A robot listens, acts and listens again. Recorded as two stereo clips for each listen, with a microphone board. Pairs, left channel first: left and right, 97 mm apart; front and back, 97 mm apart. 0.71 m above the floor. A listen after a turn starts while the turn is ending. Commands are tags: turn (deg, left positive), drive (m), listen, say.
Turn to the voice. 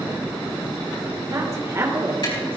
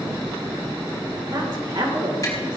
<turn deg="-150"/>
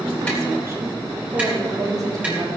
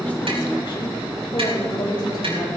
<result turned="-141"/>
<turn deg="-40"/>
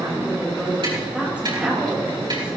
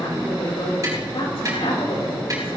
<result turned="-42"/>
<turn deg="-15"/>
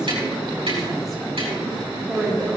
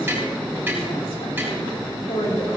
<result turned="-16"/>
<say>Facing the woman speaking.</say>